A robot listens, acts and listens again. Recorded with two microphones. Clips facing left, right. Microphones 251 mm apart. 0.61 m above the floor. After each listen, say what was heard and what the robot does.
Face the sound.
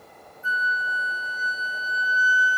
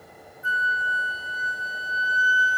Turn 30° right.
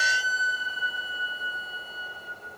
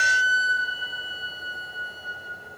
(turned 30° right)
So it is at 135° right. Turn 135° right.
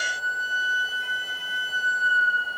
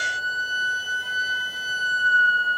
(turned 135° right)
The flute is now 45° right. Turn 45° right.
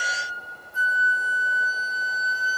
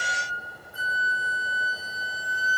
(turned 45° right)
The flute is now 10° right. Turn 10° right.
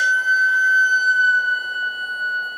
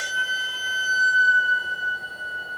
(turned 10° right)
Facing the flute, 1 to 2 m away.